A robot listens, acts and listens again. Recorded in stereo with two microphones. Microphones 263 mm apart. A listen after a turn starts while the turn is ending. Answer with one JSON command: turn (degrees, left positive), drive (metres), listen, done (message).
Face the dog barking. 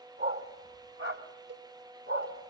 {"turn": -60}
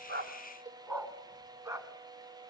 {"turn": -15}
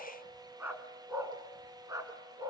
{"turn": -15}
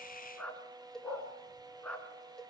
{"done": "Facing the dog barking, 2 to 4 m away."}